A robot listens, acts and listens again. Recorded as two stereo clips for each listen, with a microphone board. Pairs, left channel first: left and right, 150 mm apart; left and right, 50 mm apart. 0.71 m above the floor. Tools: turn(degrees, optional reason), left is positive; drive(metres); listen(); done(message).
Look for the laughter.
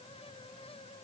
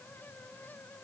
listen()
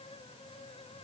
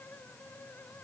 listen()
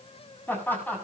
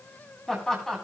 turn(degrees=30)
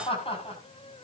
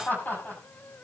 turn(degrees=140, reason="So it is at 140° left.")
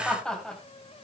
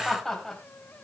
done("Found it: laughter, straight ahead.")